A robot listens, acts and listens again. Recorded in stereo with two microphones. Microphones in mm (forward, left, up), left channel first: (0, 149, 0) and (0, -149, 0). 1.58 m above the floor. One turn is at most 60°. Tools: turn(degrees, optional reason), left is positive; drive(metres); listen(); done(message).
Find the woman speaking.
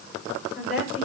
turn(degrees=30)
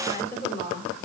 turn(degrees=60, reason="So it is at 145° left.")
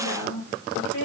turn(degrees=60, reason="The woman speaking is now 80° left.")
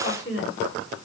turn(degrees=40, reason="The woman speaking is now 40° left.")
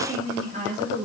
turn(degrees=-25, reason="The woman speaking is now 25° right.")
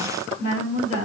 turn(degrees=-25, reason="The woman speaking is now 25° right.")
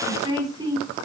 turn(degrees=-10, reason="The woman speaking is now 10° right.")
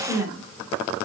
done("Found it: a woman speaking, straight ahead.")